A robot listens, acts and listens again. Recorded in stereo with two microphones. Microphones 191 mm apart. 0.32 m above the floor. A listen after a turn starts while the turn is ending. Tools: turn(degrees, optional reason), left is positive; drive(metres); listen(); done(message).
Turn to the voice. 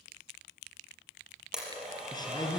turn(degrees=20, reason="The man speaking: about 20° left or 160° left.")
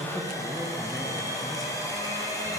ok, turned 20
done("Facing the man speaking.")